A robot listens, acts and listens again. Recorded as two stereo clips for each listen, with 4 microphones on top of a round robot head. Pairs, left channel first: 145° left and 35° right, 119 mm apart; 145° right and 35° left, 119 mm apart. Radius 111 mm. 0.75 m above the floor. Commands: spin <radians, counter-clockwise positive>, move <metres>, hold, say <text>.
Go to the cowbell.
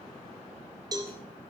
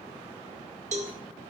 spin 0.35
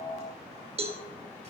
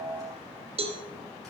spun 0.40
move 1.0
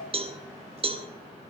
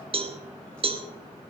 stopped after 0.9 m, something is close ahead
say Arrived at the cowbell, straight ahead.